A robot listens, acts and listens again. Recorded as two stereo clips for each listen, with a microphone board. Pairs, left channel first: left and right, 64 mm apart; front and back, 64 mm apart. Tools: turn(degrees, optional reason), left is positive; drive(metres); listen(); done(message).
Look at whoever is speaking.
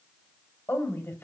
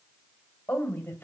turn(degrees=50, reason="The woman speaking: 50° left.")
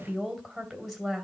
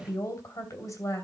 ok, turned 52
done("Facing the woman speaking.")